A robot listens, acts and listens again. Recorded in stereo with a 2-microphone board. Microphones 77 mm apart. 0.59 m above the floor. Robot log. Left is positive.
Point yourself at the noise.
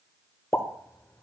note: The pop: about 35° left or 145° left.
cmd yaw +35
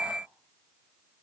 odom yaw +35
cmd idle
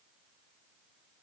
end: I heard a pop, but can't make it out now. It was about straight ahead or 110° left.